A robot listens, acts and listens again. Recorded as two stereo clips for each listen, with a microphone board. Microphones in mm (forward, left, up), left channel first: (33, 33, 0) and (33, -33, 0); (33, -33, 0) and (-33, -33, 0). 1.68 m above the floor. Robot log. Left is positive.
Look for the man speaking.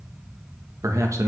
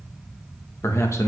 note: The man speaking: 45° right.
cmd yaw -45
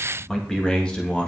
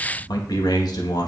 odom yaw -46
note: The man speaking is now 15° left.
cmd yaw +15
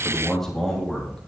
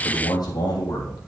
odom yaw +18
end: Found it: a man speaking, straight ahead.